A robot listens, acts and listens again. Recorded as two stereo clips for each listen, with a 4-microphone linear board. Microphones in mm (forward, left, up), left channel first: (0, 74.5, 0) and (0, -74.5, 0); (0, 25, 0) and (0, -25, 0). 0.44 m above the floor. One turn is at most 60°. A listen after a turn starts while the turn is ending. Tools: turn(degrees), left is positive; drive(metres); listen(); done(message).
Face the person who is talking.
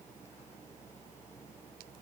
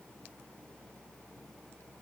listen()
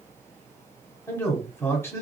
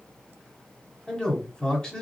turn(degrees=15)
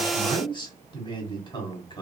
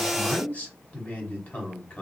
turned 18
turn(degrees=60)
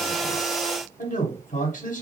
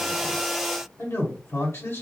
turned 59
turn(degrees=60)
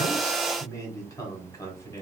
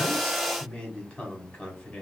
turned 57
turn(degrees=25)
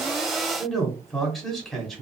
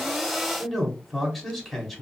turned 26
done("Found it: a man speaking, straight ahead, 1 to 2 m away.")